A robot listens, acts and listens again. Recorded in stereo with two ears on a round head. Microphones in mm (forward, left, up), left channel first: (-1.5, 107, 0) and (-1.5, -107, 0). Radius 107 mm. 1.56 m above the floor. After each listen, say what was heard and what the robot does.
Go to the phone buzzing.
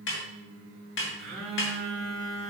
Turn 30° left.
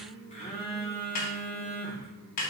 So it is at 150° left. Turn 150° left.
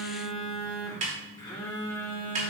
The phone buzzing is now 20° left. Turn 20° left.
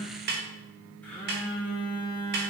The phone buzzing is now 10° left. Turn 10° left.
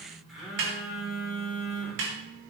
Drive 1.0 m forward.
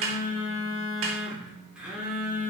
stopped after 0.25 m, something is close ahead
Something is in my way. I am facing the phone buzzing but have not reached it.